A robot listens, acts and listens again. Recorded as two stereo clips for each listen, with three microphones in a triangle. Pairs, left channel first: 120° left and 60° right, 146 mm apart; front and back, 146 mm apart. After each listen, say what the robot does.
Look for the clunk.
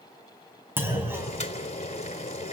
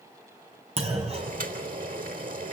Turn 135° right.
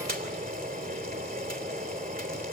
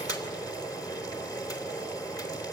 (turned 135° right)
Facing where the clunk came from. I can't hear it now.